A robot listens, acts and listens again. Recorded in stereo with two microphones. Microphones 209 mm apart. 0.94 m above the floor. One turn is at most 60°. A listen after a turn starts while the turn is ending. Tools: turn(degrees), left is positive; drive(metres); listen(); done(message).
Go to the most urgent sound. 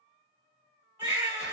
turn(degrees=-30)
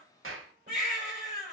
turn(degrees=-60)
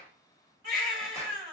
turn(degrees=-60)
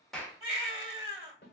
turn(degrees=-20)
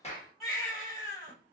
drive(metres=1.0)
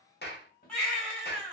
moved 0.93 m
drive(metres=1.0)
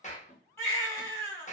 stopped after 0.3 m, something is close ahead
turn(degrees=15)
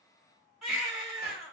done("I am next to the baby crying.")